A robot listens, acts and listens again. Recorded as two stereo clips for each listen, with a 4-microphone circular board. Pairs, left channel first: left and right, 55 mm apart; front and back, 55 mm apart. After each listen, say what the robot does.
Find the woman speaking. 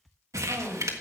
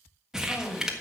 Turn 60° right.
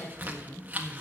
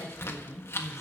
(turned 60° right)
Turn 20° left.
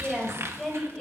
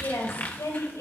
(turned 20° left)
Turn 10° left.
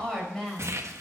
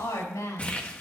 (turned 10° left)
Facing the woman speaking.